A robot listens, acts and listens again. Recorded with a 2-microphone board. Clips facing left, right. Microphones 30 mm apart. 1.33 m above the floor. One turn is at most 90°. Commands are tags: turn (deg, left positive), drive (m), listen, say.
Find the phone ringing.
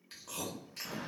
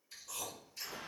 <listen/>
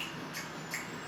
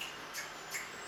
<listen/>
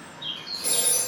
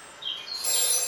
<turn deg="35"/>
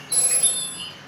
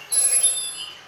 <turn deg="90"/>
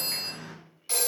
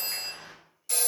<turn deg="40"/>
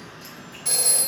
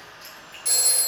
<turn deg="10"/>
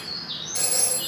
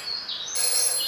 <say>Facing the phone ringing, 1 to 2 m away.</say>